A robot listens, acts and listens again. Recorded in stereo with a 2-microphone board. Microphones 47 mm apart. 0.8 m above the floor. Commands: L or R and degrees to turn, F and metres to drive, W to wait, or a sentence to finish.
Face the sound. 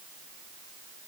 W
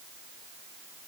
W
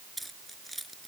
L30
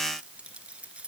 R25
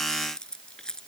L15
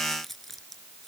Found it: keys jangling, straight ahead.